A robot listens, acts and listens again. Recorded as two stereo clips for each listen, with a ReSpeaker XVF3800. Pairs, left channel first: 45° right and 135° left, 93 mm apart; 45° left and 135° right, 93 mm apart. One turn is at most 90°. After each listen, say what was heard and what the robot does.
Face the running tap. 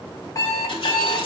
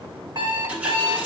The running tap: 60° right. Turn 60° right.
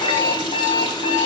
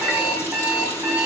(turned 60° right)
The running tap is now 15° right. Turn 15° right.
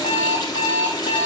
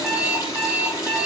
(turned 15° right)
Found it: a running tap, straight ahead, 2 to 4 m away.